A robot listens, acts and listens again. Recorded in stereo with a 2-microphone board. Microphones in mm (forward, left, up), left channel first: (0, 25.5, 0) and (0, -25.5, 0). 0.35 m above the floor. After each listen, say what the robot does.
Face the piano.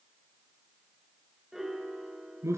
Turn 30° right.
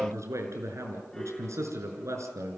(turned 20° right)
Turn 10° left.
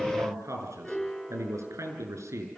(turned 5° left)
Found it: a piano, straight ahead, 2 to 4 m away.